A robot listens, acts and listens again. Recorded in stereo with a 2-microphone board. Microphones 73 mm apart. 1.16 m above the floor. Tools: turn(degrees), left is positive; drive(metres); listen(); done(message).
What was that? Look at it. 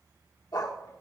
turn(degrees=60)
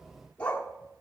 turn(degrees=20)
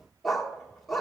done("Found it: a dog barking, straight ahead, 1 to 2 m away.")